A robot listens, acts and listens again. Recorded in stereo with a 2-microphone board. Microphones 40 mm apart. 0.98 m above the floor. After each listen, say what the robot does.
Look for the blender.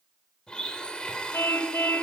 Turn 20° left.
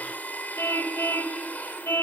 Turn 140° left.
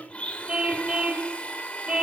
Turn 30° left.
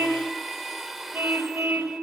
Facing the blender.